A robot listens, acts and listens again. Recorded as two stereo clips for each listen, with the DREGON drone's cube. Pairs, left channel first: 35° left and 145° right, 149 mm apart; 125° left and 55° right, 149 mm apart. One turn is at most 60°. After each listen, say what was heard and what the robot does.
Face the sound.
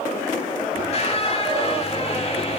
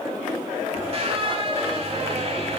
The squeak: 10° right. Turn 10° right.
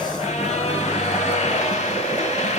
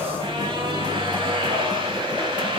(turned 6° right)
Facing the squeak, 1 to 2 m away.